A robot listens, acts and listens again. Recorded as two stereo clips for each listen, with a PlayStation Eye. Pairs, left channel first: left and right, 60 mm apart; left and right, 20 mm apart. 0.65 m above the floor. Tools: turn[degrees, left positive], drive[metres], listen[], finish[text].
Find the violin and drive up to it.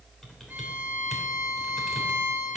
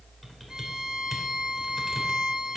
Thought: The violin: about 30° right or 150° right.
Action: turn[-30]
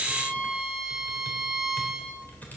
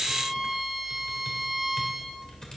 Action: drive[1.0]
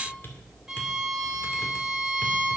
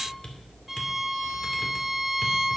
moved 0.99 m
Thought: The violin is now 10° right.
Action: turn[-10]
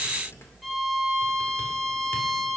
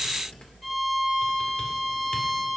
Action: drive[1.0]
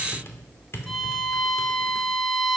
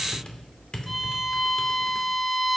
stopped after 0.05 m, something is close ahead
Action: finish[I am next to the violin.]